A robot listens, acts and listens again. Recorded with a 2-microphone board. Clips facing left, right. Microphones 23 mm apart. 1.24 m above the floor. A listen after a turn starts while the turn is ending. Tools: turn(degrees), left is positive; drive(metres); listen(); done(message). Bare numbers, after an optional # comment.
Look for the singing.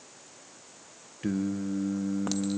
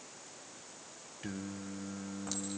turn(30)
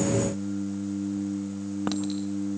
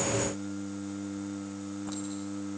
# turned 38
# So it is at 30° right.
turn(-30)
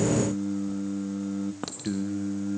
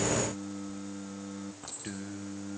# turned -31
done("Facing the singing.")